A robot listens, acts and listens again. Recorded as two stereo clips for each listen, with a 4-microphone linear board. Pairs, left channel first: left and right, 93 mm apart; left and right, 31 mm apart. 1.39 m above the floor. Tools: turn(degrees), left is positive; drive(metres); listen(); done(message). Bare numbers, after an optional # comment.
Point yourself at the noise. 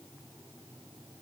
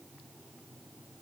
listen()
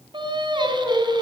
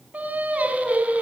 # The singing: about 50° right or 130° right.
turn(-50)
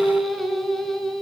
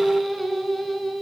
done("Facing the singing, over 4 m away.")